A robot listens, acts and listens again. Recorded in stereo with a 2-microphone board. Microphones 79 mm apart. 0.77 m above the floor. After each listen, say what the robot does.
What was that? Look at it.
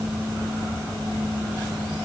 Keep listening.
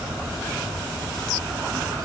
Keep listening.
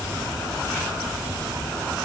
I can't make out anything to turn to.